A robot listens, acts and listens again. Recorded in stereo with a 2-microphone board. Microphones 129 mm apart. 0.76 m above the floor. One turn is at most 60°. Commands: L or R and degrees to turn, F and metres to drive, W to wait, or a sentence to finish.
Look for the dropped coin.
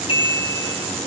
W
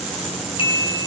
W
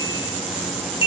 I can't make out a dropped coin, only a bicycle bell.